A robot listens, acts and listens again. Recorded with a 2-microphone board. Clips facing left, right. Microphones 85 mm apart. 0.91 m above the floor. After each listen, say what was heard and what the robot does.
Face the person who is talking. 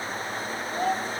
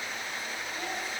Turn 90° left.
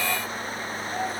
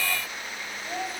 Found it: a child speaking, straight ahead, 2 to 4 m away.